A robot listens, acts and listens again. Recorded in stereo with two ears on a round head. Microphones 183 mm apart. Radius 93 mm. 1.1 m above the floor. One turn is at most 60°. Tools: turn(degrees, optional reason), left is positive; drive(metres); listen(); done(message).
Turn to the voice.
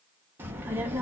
turn(degrees=-30)
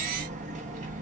turn(degrees=-60, reason="So it is at 140° right.")
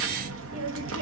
turn(degrees=-60, reason="The child speaking is now 100° right.")
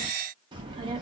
turn(degrees=-20, reason="The child speaking is now 20° right.")
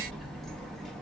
done("Facing the child speaking, under 1 m away.")